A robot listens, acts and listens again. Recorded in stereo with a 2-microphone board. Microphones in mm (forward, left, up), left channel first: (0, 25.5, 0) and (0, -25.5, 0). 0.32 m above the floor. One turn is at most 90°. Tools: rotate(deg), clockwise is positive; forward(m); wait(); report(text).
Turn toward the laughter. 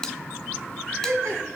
rotate(60)
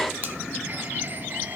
wait()
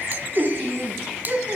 rotate(40)
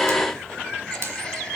wait()
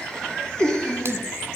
rotate(-15)
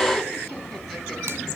wait()
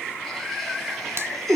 report("Found it: laughter, straight ahead, 2 to 4 m away.")